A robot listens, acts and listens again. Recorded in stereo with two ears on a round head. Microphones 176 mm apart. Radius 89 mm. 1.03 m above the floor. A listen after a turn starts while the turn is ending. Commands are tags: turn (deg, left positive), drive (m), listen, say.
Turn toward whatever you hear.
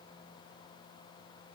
<listen/>
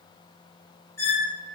<turn deg="30"/>
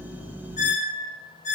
<turn deg="135"/>
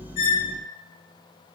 <listen/>
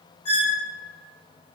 <turn deg="35"/>
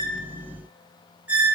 <turn deg="-10"/>
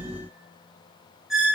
<say>Found it: a squeak, straight ahead, under 1 m away.</say>